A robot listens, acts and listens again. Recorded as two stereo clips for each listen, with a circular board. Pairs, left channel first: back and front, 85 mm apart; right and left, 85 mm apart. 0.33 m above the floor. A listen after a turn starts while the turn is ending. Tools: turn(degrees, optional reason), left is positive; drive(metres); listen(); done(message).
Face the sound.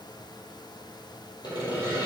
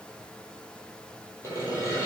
turn(degrees=-145, reason="The sawing: 145° right.")
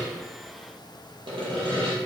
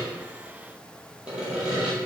turn(degrees=10, reason="The sawing is now 10° left.")
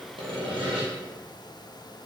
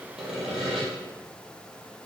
done("Facing the sawing, 1 to 2 m away.")